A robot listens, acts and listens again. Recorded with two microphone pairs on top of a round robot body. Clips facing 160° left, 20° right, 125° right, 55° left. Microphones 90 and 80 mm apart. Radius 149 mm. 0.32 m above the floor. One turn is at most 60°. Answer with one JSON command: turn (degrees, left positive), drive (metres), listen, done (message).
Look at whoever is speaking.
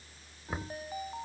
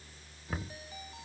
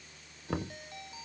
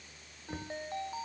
{"listen": true}
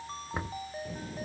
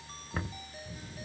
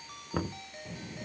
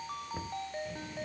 {"turn": 60}
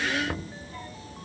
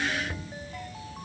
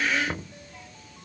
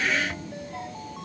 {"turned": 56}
{"turn": 60}
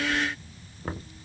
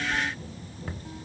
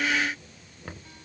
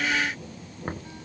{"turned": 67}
{"turn": 35}
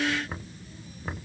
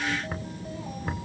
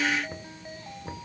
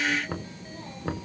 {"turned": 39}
{"done": "Found it: a child speaking, straight ahead."}